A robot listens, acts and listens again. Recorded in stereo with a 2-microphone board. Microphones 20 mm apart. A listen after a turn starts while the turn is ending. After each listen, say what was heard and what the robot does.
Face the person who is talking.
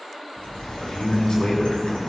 The man speaking: about 55° left or 125° left. Turn 55° left.
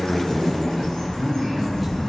Found it: a man speaking, straight ahead, over 4 m away.